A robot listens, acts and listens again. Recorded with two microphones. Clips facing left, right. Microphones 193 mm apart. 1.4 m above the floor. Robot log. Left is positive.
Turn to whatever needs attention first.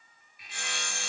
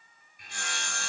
cmd idle
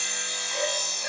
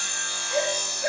cmd yaw -90
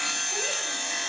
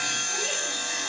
cmd idle
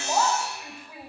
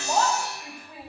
end: Found it: a shout, straight ahead, over 4 m away.